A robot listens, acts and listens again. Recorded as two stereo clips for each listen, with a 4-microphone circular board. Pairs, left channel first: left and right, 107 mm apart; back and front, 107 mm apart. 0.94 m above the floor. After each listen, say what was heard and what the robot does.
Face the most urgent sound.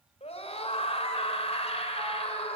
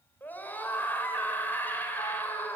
The scream: 110° left. Turn 110° left.
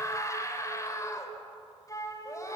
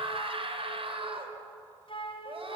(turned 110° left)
The scream is now 30° left. Turn 30° left.
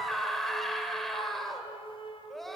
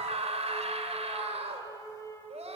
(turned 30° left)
Found it: a scream, straight ahead, 2 to 4 m away.